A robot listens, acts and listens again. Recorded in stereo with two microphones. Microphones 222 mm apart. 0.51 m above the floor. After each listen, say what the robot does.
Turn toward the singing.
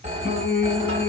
Turn 45° left.
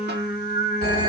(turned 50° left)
Facing the singing, under 1 m away.